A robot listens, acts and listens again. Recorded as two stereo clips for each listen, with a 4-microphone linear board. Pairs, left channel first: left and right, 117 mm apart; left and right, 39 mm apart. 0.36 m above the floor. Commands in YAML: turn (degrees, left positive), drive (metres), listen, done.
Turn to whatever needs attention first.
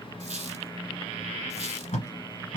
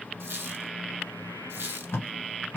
listen: true
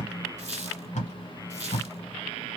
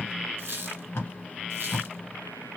listen: true
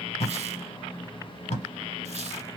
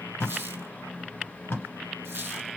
done: "I can't make out anything urgent to turn to."